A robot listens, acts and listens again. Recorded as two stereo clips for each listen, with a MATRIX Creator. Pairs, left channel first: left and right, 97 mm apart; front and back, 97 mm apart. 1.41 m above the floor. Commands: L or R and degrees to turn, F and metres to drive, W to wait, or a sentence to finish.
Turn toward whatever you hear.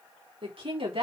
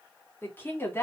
R65
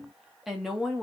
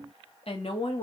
Found it: a woman speaking, straight ahead.